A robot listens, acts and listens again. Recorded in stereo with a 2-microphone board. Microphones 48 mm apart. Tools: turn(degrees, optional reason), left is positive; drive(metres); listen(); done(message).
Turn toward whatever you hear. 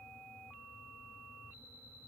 listen()
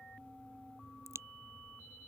turn(degrees=-90)
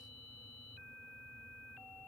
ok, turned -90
done("I heard a crack from this way, but can't make it out now.")